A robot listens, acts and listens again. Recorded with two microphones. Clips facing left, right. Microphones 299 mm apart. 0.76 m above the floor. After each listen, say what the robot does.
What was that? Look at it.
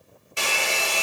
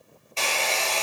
Turn 30° left.
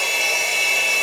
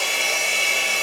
Turn 15° right.
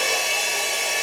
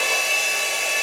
Found it: a hair dryer, straight ahead, under 1 m away.